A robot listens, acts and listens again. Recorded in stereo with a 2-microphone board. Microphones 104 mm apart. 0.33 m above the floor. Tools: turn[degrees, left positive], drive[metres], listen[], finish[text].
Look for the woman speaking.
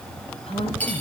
Thought: The woman speaking: about 65° left or 115° left.
Action: turn[65]
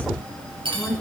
Thought: So it is at 20° left.
Action: turn[20]
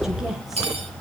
Action: finish[Found it: a woman speaking, straight ahead, 2 to 4 m away.]